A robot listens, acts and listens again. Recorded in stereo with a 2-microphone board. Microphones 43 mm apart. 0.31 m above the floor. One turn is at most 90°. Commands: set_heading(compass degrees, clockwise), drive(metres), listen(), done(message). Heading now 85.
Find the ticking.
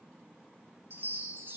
listen()
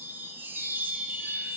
listen()
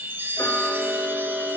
set_heading(15)
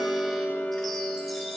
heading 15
set_heading(340)
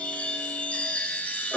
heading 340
listen()
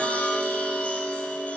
done("Facing the ticking, 1 to 2 m away.")